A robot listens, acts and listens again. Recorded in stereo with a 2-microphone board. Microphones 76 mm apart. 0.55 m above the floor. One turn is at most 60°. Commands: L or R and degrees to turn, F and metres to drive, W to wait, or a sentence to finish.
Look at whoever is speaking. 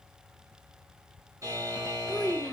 L30
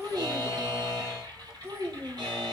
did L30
R35
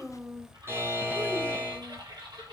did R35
Facing the child speaking.